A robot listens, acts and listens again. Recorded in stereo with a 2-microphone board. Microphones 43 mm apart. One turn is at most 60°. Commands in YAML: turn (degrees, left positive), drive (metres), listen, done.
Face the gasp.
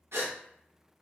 turn: -60
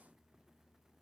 turn: -30
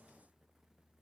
done: "Facing where the gasp came from. I can't hear it now."